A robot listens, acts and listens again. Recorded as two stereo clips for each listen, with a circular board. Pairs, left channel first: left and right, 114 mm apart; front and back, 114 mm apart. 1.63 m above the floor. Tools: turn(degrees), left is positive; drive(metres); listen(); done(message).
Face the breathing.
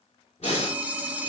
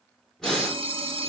turn(degrees=85)
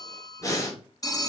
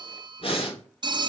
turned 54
turn(degrees=30)
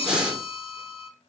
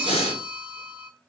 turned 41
turn(degrees=-10)
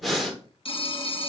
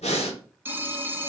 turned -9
done("Facing the breathing.")